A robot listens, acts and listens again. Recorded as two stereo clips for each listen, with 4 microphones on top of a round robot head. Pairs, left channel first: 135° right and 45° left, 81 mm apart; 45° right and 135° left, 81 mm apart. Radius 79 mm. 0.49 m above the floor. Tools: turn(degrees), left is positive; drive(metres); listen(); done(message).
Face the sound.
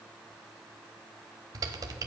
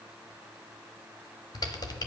done("Facing the typing on a keyboard.")